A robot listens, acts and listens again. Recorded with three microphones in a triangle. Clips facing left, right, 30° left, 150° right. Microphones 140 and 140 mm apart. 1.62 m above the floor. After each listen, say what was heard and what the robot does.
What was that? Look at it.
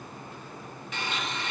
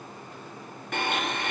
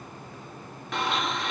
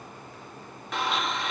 The blender: 60° right. Turn 60° right.
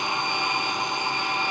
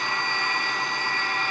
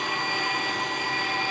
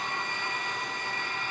The blender is now 20° left. Turn 20° left.
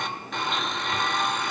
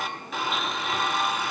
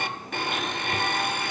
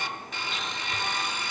Facing the blender, under 1 m away.